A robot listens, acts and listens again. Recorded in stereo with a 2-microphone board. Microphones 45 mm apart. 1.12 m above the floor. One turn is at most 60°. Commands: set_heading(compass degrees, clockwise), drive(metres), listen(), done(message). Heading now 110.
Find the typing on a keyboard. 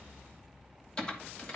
set_heading(95)
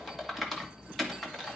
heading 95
done("Facing the typing on a keyboard, 2 to 4 m away.")